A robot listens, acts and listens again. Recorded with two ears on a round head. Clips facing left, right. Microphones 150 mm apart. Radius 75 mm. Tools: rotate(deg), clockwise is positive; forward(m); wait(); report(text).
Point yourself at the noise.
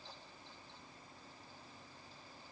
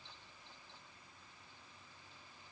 wait()
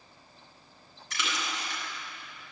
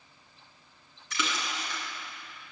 rotate(90)
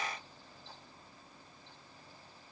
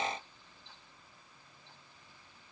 report("Facing where the splash came from. I can't hear it now.")